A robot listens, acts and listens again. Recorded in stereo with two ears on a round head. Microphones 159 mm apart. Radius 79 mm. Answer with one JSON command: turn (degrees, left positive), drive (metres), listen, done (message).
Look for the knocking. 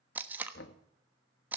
{"turn": 60}
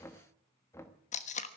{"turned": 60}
{"turn": 15}
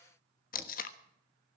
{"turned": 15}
{"listen": true}
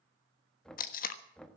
{"done": "Found it: knocking, straight ahead."}